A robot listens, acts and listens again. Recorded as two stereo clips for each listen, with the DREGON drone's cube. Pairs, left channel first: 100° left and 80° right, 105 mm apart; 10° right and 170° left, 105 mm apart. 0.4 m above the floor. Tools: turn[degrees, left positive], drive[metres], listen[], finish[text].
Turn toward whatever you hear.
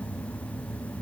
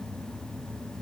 Action: listen[]
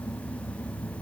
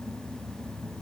Action: listen[]
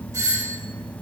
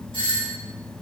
Thought: The doorbell: 30° right.
Action: turn[-30]
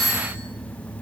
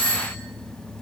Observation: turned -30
Thought: The doorbell is now 10° left.
Action: turn[10]
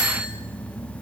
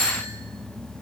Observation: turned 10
Action: finish[Found it: a doorbell, straight ahead, 2 to 4 m away.]